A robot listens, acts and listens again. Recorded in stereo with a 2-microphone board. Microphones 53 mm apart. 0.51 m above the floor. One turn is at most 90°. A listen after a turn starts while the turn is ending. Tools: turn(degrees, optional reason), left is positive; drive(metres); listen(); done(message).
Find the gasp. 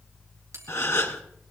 turn(degrees=65, reason="The gasp: about 65° left or 115° left.")
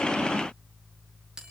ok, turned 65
listen()
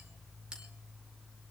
done("I heard a gasp, but can't make it out now. It was about straight ahead or 50° left.")